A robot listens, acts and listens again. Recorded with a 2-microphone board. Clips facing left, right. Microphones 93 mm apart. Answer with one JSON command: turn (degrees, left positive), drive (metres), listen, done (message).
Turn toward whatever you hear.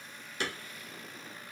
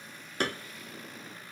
{"turn": -50}
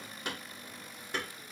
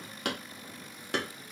{"turn": -85}
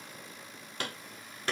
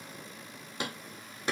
{"turn": -15}
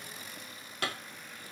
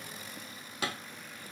{"done": "Facing the hammering."}